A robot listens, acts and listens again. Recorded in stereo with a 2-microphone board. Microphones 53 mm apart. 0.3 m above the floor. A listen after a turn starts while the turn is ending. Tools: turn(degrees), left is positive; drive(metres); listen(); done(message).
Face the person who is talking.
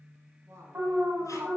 turn(degrees=-60)
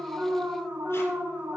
listen()
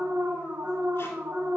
listen()
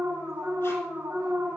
done("I heard a woman speaking, but can't make it out now. It was about straight ahead or 60° right.")